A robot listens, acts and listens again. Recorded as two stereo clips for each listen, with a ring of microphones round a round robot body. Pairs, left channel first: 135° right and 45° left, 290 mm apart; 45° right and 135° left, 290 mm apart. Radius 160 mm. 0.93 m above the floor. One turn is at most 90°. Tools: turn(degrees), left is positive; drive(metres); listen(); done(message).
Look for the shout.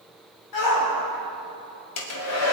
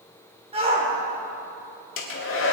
turn(degrees=-90)
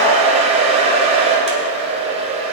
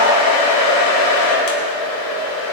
turn(degrees=-65)
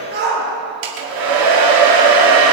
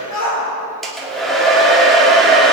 turn(degrees=-15)
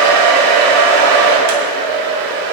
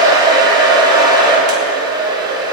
listen()
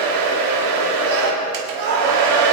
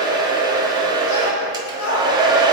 done("Found it: a shout, straight ahead, over 4 m away.")